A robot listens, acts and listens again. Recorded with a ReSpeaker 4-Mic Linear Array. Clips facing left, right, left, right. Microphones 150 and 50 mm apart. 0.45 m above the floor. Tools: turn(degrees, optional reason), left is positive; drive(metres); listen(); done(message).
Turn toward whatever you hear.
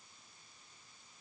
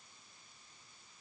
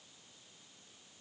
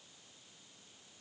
listen()
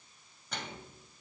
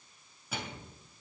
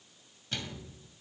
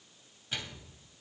turn(degrees=-30)
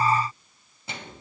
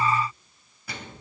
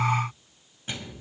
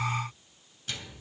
turn(degrees=25, reason="So it is at 25° left.")
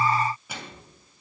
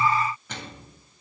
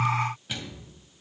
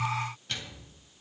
turn(degrees=10, reason="The microwave is now 10° left.")
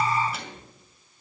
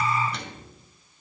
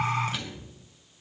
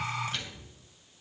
done("Found it: a microwave, straight ahead, 2 to 4 m away.")